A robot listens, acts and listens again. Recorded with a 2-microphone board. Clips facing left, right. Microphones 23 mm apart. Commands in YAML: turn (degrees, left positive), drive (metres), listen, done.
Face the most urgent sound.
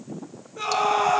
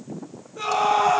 turn: 30
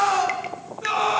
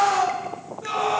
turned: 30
turn: 145
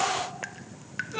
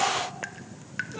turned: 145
turn: 50
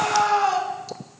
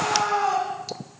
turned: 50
turn: 20
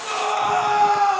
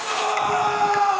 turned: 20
done: "Found it: a scream, straight ahead."